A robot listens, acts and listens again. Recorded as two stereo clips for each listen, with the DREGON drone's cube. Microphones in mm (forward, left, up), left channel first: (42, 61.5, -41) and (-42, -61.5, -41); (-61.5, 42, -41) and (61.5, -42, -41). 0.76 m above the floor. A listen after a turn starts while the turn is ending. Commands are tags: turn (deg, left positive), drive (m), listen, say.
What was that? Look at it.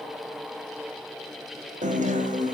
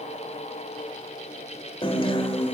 <turn deg="-160"/>
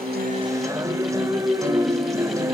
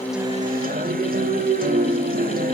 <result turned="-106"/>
<turn deg="-55"/>
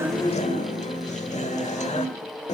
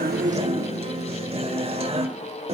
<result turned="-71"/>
<turn deg="15"/>
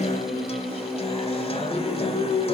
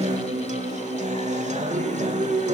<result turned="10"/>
<say>Found it: a guitar, straight ahead, 1 to 2 m away.</say>